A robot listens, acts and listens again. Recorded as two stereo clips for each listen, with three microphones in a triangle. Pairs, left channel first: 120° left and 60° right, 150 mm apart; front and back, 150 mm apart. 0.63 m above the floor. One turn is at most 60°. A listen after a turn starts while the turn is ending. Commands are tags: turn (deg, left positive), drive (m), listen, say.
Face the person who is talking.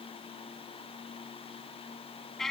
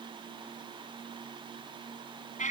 <listen/>
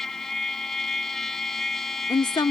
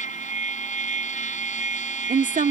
<turn deg="60"/>
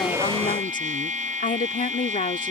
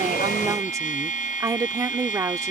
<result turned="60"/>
<turn deg="60"/>
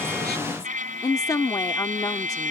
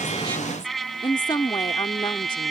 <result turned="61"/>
<turn deg="55"/>
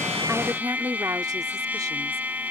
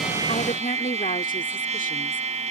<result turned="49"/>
<say>Found it: a woman speaking, straight ahead.</say>